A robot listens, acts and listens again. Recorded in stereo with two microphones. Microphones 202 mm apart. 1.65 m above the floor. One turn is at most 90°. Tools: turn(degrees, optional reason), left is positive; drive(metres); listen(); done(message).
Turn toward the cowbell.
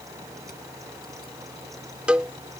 turn(degrees=-30)
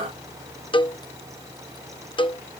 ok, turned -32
turn(degrees=25, reason="So it is at 25° left.")
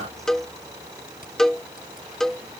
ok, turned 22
done("Found it: a cowbell, straight ahead.")